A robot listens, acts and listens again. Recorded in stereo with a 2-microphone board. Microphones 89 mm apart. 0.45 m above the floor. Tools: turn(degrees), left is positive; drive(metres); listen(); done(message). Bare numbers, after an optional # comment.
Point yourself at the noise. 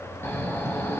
# The snoring: about 30° left or 150° left.
turn(30)
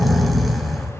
done("Found it: snoring, straight ahead.")